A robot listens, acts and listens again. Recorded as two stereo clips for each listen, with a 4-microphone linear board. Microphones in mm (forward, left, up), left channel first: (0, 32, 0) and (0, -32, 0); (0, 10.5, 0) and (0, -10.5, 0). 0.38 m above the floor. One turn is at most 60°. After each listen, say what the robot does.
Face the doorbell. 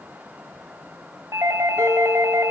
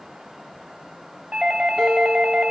Turn 50° right.
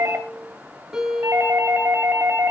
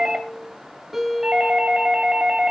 Turn 60° right.
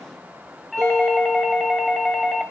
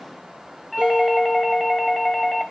Facing the doorbell, 2 to 4 m away.